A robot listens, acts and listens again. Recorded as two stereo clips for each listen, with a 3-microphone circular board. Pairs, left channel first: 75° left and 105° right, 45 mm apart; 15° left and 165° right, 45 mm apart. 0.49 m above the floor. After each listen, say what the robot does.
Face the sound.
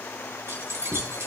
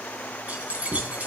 Turn 110° right.
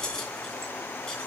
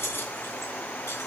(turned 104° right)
Facing the keys jangling, 2 to 4 m away.